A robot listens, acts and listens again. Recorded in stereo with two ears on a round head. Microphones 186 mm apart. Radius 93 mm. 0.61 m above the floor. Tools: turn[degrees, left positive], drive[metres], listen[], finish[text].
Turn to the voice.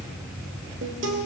Action: listen[]
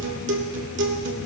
Action: listen[]
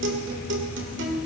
Action: finish[I can't make out anyone speaking, only a guitar.]